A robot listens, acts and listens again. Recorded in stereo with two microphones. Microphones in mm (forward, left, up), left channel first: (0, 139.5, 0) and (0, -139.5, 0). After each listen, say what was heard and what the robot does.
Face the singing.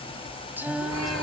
Turn 30° right.
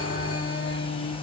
So it is at 50° left. Turn 50° left.
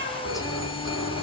Keep listening.
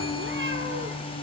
The singing is now 30° left. Turn 30° left.
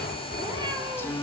The singing is now 10° left. Turn 10° left.
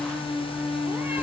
Found it: singing, straight ahead.